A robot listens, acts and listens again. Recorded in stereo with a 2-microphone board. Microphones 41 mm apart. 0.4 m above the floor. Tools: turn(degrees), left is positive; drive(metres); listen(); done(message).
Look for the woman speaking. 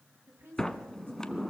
turn(degrees=-65)
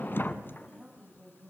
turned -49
turn(degrees=-10)
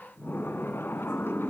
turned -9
listen()
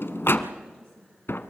listen()
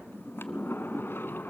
done("I heard a woman speaking from this way, but can't make it out now.")